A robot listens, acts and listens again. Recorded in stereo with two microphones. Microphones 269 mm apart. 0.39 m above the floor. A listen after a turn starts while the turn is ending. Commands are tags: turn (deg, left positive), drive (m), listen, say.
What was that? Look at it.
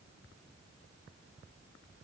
<listen/>
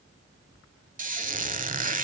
<turn deg="-30"/>
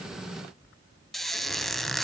<say>Facing the squeak.</say>